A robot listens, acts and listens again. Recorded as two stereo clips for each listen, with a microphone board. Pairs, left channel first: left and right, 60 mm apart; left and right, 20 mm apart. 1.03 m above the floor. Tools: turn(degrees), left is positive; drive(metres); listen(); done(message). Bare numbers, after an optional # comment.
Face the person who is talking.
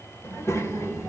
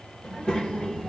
# The child speaking: about 55° left or 125° left.
turn(55)
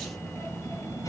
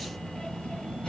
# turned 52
# So it is at 60° left.
turn(60)
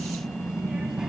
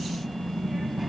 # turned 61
# The child speaking is now 10° right.
turn(-10)
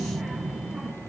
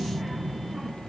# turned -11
done("Facing the child speaking.")